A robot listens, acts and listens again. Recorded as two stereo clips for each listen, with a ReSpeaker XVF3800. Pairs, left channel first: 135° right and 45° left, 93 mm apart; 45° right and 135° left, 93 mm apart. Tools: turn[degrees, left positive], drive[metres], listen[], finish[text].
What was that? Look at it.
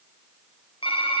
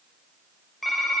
Thought: The typing on a keyboard: 135° right.
Action: turn[-135]
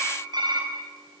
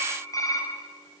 Action: finish[Facing the typing on a keyboard, over 4 m away.]